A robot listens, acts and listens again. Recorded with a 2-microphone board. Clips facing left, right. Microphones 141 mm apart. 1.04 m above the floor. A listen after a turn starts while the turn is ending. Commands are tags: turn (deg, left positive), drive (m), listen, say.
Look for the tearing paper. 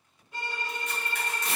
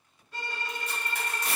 <turn deg="-30"/>
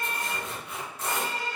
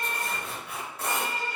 <turn deg="-120"/>
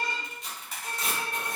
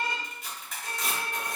<say>Facing the tearing paper, 1 to 2 m away.</say>